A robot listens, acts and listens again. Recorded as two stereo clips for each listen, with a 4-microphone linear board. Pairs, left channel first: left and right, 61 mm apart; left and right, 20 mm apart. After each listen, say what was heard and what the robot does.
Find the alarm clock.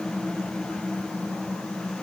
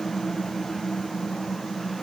Keep listening.
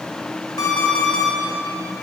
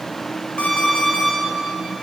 Turn 90° left.
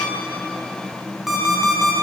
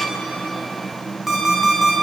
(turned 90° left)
Facing the alarm clock.